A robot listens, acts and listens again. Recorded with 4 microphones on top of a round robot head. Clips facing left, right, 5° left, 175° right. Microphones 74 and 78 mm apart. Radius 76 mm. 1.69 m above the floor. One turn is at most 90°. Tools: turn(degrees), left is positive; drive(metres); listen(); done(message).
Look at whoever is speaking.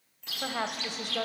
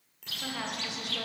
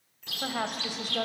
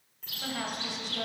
turn(degrees=40)
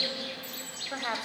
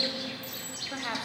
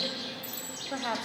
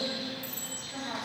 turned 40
turn(degrees=15)
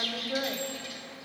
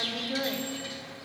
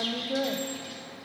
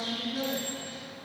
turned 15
done("Facing the woman speaking, 1 to 2 m away.")